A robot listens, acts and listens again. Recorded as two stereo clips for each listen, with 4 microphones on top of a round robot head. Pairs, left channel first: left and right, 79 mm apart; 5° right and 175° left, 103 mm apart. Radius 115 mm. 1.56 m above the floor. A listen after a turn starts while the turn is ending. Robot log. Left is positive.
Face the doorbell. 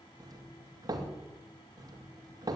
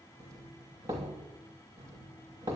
note: The doorbell: 125° right.
cmd yaw -125
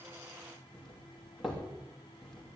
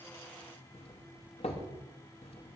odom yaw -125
end: Facing the doorbell.